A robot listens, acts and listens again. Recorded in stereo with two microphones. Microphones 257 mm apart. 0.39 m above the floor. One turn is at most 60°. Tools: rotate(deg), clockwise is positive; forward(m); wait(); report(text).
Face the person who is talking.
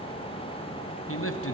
rotate(-60)
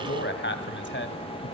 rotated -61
rotate(-50)
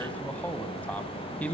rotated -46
report("Found it: a man speaking, straight ahead, 2 to 4 m away.")